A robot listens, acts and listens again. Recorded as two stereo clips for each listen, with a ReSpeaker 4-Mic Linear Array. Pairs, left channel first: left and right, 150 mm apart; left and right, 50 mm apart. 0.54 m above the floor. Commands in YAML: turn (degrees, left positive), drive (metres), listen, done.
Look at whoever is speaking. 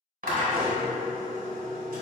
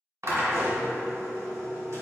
listen: true
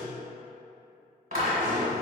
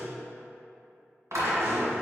listen: true
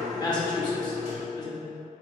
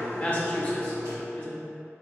turn: 30
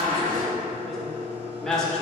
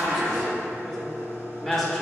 done: "Found it: a woman speaking, straight ahead."